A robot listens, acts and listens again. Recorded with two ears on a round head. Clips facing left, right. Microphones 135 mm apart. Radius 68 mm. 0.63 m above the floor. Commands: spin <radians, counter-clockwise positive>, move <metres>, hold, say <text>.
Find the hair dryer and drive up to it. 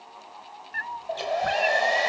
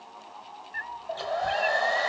spin 0.44
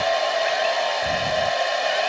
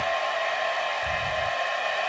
spin 2.27
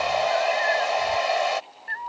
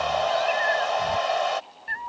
spin 0.17
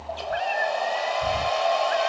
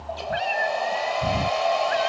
move 1.0
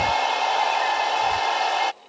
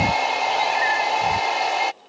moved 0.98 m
move 1.0
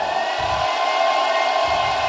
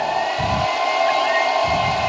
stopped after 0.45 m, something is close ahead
say Arrived at the hair dryer, straight ahead.